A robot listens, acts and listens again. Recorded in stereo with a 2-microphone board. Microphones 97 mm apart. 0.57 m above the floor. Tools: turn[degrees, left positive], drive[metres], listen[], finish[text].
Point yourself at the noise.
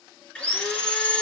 Action: turn[30]
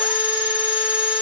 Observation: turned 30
Thought: So it is at 15° right.
Action: turn[-15]
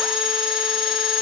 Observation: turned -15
Action: finish[Found it: sawing, straight ahead, 1 to 2 m away.]